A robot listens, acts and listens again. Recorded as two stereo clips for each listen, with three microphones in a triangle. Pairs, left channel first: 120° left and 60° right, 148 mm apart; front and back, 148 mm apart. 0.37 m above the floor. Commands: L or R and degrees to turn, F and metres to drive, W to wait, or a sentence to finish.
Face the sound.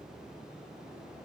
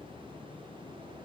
W
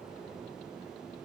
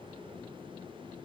W
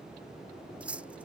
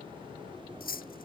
L20
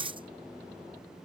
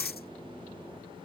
Facing the cutlery clinking.